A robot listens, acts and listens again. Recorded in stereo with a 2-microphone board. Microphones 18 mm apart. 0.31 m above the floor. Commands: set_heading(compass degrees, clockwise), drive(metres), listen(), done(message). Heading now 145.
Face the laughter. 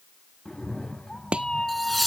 set_heading(115)
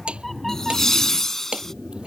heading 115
set_heading(315)
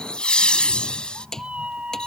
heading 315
set_heading(255)
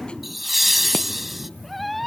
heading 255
done("Found it: laughter, straight ahead.")